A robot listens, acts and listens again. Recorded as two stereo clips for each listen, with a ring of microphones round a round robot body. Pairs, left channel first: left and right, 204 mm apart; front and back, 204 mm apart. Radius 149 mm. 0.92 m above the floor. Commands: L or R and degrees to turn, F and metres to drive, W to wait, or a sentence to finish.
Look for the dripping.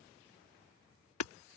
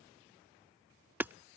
W
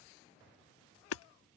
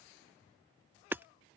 W
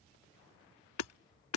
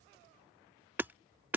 I can't make out dripping, only hammering.